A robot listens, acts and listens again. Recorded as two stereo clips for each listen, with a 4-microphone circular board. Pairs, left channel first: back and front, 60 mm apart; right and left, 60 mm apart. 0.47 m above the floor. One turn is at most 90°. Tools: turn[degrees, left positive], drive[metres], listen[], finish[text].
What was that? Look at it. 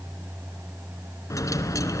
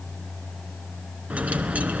Thought: The dropped coin: 155° left.
Action: turn[90]
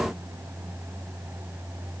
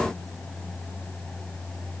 Thought: Nothing new. It was at 65° left.
Action: turn[65]
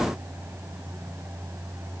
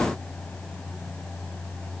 Action: finish[Facing where the dropped coin came from. I can't hear it now.]